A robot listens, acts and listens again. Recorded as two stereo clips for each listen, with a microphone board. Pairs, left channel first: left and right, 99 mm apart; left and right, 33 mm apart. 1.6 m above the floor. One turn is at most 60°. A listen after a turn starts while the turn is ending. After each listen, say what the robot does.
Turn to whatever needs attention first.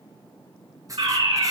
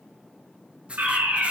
Turn 60° right.
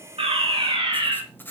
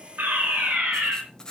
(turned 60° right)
Turn 55° right.
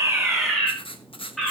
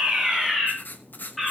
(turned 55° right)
Facing the fire alarm.